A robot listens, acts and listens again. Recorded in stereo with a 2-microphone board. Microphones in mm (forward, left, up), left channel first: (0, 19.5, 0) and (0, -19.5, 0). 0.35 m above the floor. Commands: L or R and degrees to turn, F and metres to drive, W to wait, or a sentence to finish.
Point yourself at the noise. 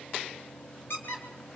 L60
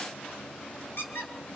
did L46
L70
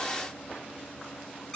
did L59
L15
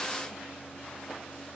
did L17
W
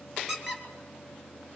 Facing the squeak, 2 to 4 m away.